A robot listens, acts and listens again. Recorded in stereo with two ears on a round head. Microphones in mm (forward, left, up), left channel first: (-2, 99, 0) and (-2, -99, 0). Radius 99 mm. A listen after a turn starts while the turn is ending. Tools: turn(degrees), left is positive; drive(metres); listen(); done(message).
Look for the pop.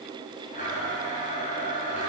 listen()
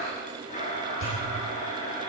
turn(degrees=65)
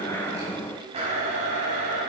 listen()
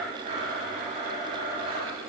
done("I heard a pop, but can't make it out now. It was about straight ahead or 50° left.")